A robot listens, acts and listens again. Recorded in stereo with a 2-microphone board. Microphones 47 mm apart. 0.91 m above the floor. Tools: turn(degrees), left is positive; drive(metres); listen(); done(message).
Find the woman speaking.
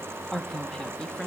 turn(degrees=20)
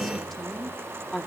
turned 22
turn(degrees=30)
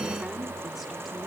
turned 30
listen()
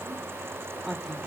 done("Facing the woman speaking, 2 to 4 m away.")